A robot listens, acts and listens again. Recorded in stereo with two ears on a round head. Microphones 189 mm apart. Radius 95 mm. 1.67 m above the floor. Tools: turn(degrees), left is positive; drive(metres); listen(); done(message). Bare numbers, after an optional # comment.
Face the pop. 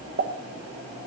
# The pop: about 50° right or 130° right.
turn(-50)
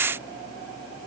listen()
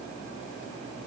done("I heard a pop, but can't make it out now. It was about straight ahead or 80° right.")